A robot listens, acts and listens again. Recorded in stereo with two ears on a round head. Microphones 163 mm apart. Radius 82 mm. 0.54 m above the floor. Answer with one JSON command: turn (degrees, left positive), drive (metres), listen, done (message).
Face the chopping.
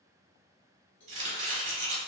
{"turn": -45}
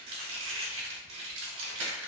{"turn": -90}
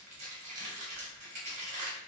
{"turn": -40}
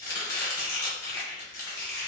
{"turn": 20}
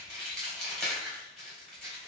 {"done": "Facing the chopping, under 1 m away."}